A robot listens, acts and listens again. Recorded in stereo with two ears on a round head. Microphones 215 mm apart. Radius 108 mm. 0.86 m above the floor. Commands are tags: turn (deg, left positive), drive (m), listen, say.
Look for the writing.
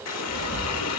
<turn deg="40"/>
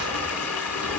<turn deg="100"/>
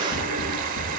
<say>Facing the writing, over 4 m away.</say>